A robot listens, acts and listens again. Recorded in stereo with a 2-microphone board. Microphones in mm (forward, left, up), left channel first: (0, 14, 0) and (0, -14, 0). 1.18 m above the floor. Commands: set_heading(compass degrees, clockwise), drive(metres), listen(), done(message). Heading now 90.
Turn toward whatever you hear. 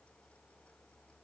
listen()
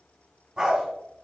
set_heading(115)
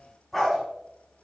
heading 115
done("Facing the dog barking, over 4 m away.")